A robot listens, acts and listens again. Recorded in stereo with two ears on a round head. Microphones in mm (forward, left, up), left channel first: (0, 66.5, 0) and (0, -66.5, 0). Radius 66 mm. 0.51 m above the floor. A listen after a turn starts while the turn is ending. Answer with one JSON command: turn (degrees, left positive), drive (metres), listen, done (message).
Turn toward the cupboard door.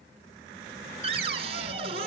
{"turn": -40}
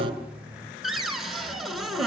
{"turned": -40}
{"done": "Found it: a cupboard door, straight ahead."}